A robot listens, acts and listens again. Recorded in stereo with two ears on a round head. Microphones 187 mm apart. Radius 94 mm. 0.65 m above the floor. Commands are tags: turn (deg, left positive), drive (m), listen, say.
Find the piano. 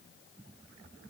<listen/>
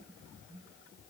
<listen/>
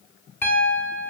<turn deg="30"/>
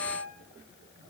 <listen/>
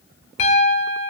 <turn deg="140"/>
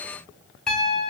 <say>Found it: a piano, straight ahead.</say>